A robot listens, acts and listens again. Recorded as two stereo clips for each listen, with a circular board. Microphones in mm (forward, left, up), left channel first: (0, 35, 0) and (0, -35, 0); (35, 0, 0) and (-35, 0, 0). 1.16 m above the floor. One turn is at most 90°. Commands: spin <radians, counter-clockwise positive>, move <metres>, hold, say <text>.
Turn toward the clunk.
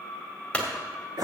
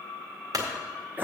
spin 1.57
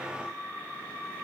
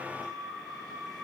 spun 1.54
spin 1.31
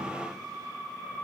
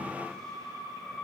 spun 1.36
say I heard a clunk from this way, but can't make it out now.